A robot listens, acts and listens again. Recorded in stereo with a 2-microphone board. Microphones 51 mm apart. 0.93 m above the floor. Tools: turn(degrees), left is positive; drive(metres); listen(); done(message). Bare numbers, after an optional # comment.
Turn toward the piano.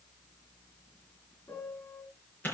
turn(90)
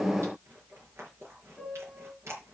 # So it is at 10° right.
turn(-10)
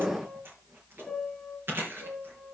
done("Facing the piano, 2 to 4 m away.")